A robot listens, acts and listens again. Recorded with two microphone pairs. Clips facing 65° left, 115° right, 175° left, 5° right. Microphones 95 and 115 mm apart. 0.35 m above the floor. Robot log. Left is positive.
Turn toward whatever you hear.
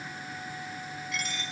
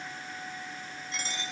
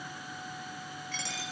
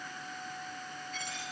note: The dropped coin: 175° right.
cmd yaw -175
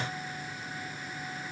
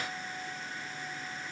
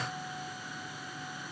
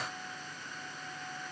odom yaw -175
end: I heard a dropped coin from this way, but can't make it out now.